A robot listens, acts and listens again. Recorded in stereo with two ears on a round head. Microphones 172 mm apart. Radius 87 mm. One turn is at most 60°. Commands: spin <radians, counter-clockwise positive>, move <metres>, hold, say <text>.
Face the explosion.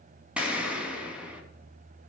spin -0.52
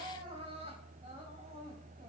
hold
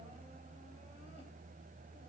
say I heard an explosion, but can't make it out now. It was about 25° left or 145° right.